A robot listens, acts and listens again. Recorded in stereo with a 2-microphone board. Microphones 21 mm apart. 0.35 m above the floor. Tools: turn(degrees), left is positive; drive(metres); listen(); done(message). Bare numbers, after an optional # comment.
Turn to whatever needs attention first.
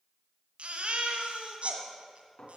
# The baby crying: about 70° right or 110° right.
turn(-70)
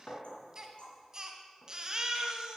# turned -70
# So it is at 35° right.
turn(-35)
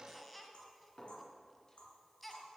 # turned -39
done("Found it: a baby crying, straight ahead.")